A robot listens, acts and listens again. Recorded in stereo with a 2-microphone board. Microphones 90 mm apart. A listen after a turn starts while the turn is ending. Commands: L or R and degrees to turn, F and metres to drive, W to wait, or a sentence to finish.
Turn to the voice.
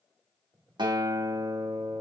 W
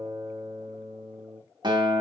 W
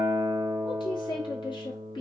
L70
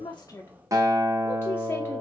L30
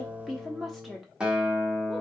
Facing the woman speaking.